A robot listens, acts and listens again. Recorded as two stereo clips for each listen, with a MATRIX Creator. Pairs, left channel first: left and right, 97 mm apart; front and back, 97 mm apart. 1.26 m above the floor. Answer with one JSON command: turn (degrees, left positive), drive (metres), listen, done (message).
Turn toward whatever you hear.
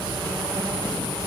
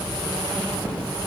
{"listen": true}
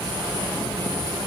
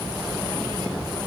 {"listen": true}
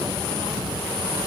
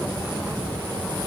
{"done": "I can't make out anything to turn to."}